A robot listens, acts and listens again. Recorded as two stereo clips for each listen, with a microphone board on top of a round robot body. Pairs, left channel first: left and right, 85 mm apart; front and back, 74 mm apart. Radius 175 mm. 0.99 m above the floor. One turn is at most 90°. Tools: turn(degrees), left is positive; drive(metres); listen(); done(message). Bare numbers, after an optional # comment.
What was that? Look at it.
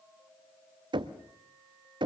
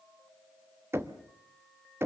# The knocking: 120° right.
turn(-90)
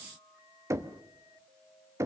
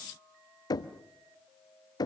# The knocking is now 30° right.
turn(-30)
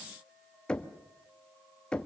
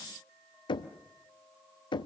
# The knocking is now 10° left.
turn(10)
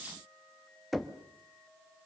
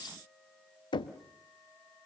done("Facing the knocking.")